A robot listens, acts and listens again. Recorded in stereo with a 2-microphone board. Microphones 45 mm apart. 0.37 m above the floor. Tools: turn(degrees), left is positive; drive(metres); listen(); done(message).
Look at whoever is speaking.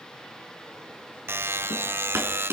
listen()
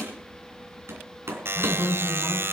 turn(degrees=30)
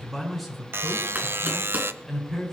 done("Found it: a man speaking, straight ahead.")